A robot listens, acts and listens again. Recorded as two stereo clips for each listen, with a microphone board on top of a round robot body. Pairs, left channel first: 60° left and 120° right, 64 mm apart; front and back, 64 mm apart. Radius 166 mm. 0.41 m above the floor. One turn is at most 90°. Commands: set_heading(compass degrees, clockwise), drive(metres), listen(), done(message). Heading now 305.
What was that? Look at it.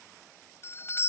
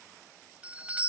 set_heading(215)
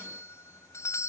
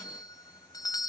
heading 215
set_heading(200)
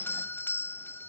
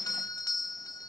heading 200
done("Found it: a doorbell, straight ahead.")